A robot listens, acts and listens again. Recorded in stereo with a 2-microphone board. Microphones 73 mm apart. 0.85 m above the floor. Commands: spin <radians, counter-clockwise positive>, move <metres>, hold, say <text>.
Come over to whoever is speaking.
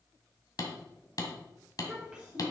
spin -0.52
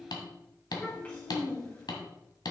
spin 0.44
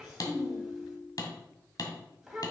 move 1.0
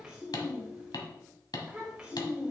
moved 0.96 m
spin -0.17
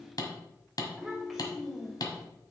move 1.0
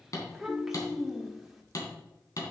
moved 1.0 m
move 1.0
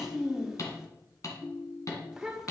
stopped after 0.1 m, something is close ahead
say Arrived at the child speaking, straight ahead.